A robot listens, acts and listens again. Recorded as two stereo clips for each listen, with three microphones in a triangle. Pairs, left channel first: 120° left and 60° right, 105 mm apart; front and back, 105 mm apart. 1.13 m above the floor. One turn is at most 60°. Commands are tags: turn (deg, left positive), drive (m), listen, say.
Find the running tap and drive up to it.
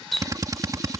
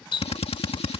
<turn deg="30"/>
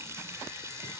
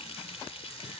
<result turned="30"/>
<drive m="1.0"/>
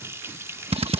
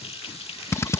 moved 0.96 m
<drive m="1.0"/>
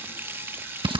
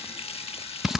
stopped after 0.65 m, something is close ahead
<turn deg="10"/>
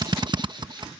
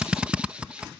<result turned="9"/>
<listen/>
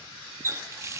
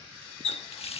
<say>I am next to the running tap.</say>